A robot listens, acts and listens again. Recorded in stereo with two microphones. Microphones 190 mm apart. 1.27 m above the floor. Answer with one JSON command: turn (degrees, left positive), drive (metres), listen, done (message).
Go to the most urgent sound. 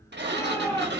{"turn": 20}
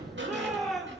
{"drive": 1.0}
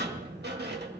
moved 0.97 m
{"listen": true}
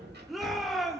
{"drive": 1.0}
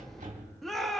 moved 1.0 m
{"drive": 1.0}
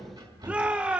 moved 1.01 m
{"drive": 1.0}
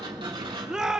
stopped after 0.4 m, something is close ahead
{"done": "I am next to the shout."}